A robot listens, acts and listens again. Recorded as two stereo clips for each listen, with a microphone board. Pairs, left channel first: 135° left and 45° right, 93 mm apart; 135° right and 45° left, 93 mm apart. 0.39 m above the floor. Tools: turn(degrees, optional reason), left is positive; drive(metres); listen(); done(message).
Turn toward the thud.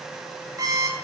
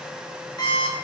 listen()
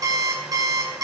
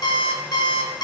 listen()
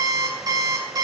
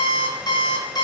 done("I can't make out a thud to turn to.")